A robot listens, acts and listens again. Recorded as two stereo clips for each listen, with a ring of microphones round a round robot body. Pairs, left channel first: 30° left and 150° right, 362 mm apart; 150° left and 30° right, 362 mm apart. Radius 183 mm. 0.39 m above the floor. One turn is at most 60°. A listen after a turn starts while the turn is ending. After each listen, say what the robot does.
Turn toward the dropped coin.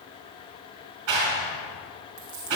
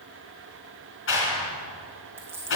Turn 60° right.
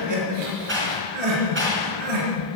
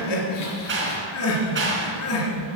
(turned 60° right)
Turn 55° right.
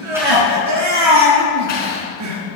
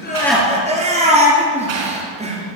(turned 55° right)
I heard a dropped coin from this way, but can't make it out now.